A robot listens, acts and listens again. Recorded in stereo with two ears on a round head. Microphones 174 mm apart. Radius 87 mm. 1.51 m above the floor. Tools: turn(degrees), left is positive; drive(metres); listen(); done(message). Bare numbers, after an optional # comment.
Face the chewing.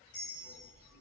listen()
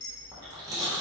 # The chewing: about 20° right or 160° right.
turn(-20)
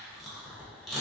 done("Facing the chewing.")